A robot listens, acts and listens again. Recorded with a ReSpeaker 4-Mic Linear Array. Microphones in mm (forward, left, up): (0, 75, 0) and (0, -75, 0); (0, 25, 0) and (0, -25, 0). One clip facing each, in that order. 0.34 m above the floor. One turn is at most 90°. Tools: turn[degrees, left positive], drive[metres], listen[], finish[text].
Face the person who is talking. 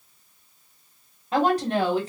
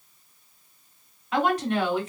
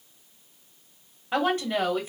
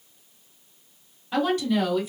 Thought: The woman speaking: about 40° left or 140° left.
Action: turn[40]
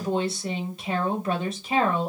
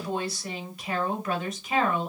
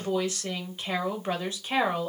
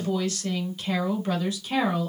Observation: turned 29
Thought: The woman speaking: about 35° left or 145° left.
Action: turn[35]
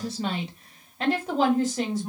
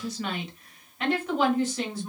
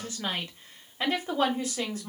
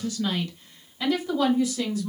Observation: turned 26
Thought: The woman speaking: about 45° left or 135° left.
Action: turn[45]
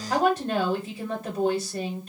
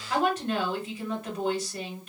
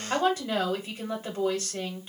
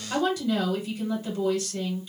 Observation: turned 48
Thought: So it is at 40° left.
Action: turn[40]
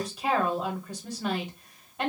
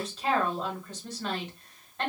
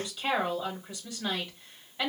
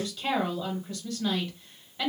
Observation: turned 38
Thought: The woman speaking is now 15° left.
Action: turn[15]
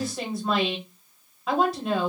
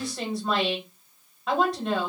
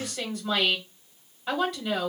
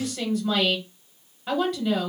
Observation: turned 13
Action: finish[Facing the woman speaking.]